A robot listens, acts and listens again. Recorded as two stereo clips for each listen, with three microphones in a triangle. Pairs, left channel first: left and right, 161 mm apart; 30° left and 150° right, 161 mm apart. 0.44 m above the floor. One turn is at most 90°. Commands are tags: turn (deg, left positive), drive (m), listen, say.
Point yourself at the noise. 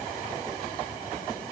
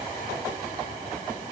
<listen/>
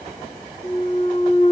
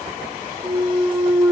<turn deg="90"/>
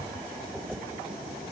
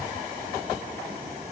<turn deg="45"/>
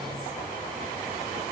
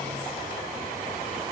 <say>Facing where the clunk came from. I can't hear it now.</say>